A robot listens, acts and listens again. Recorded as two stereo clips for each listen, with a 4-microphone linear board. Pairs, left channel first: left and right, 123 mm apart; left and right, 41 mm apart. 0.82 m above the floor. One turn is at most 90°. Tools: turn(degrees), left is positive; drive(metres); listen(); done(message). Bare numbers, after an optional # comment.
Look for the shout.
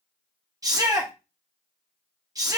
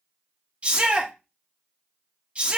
# The shout: about 30° right or 150° right.
turn(-30)
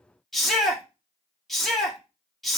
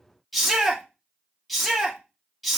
done("Facing the shout, 1 to 2 m away.")